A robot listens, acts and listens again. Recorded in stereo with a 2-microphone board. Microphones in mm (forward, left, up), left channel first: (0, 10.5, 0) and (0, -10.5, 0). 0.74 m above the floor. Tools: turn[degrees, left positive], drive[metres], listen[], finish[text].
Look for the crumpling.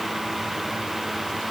Action: listen[]
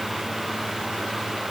Action: listen[]
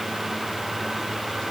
Action: finish[I can't make out crumpling to turn to.]